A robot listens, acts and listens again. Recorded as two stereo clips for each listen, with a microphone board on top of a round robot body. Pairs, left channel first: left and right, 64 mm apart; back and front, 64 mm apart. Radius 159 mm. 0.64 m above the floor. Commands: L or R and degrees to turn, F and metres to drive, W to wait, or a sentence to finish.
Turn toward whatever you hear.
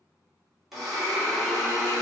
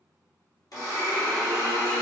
L180
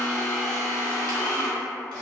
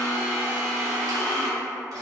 L15
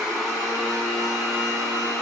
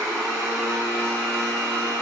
Found it: a blender, straight ahead.